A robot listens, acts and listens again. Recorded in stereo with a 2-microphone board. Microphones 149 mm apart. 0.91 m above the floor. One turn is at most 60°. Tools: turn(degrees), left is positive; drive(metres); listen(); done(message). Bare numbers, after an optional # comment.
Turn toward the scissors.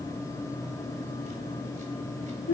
listen()
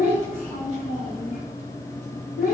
listen()
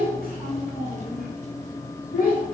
done("I can't make out scissors to turn to.")